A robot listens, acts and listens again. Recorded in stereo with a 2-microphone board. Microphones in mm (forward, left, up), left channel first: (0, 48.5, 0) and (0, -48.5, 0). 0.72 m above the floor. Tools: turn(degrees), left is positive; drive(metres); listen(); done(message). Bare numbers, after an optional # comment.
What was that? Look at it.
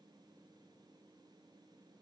listen()
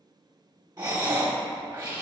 # The breathing: about 45° right or 135° right.
turn(-45)
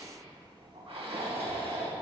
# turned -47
# So it is at 90° right.
turn(-90)
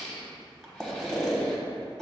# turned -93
done("Facing the breathing, 1 to 2 m away.")